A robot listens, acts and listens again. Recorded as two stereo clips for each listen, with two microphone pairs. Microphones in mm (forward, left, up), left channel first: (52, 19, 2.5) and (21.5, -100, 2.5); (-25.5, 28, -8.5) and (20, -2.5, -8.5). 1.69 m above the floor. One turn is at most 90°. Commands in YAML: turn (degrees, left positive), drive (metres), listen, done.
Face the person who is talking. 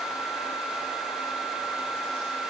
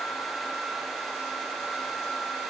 listen: true
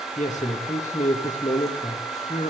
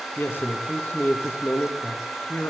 turn: 90
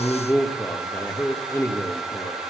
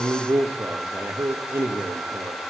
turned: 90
turn: 10
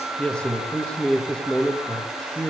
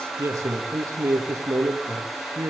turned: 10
done: "Found it: a man speaking, straight ahead, 2 to 4 m away."